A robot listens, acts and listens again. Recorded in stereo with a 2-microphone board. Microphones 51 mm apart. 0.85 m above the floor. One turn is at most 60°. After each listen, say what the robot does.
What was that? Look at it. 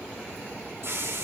Turn 60° right.
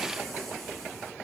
Keep listening.
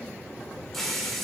Found it: a hiss, straight ahead.